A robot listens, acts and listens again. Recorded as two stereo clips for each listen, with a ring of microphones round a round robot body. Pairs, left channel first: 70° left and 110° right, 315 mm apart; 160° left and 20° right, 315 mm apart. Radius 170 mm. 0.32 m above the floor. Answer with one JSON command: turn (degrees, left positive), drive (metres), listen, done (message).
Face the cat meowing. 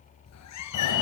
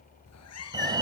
{"turn": 110}
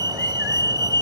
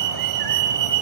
{"listen": true}
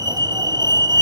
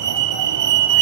{"listen": true}
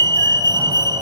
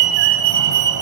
{"done": "Facing where the cat meowing came from. I can't hear it now."}